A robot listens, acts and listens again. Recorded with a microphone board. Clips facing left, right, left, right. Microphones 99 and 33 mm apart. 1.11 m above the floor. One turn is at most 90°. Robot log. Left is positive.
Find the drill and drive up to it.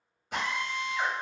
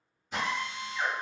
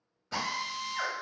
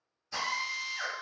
note: The drill: about 65° left or 115° left.
cmd yaw +65
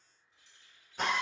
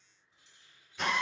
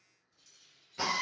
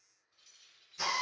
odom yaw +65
note: So it is at 45° left.
cmd yaw +45
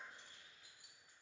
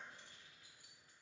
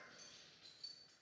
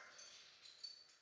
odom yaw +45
cmd idle
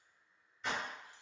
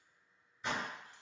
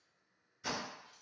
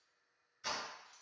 cmd fwd 1.0
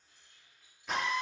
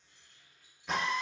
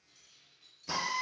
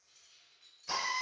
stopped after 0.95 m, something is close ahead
end: Arrived at the drill, straight ahead.